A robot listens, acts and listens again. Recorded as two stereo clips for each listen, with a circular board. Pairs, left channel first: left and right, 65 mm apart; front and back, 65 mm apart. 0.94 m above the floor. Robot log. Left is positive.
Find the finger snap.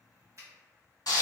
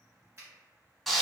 note: The finger snap: 130° right.
cmd yaw -130
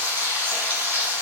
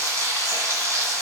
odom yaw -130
cmd idle
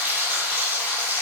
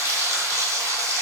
cmd idle
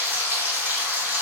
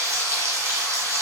end: Facing where the finger snap came from. I can't hear it now.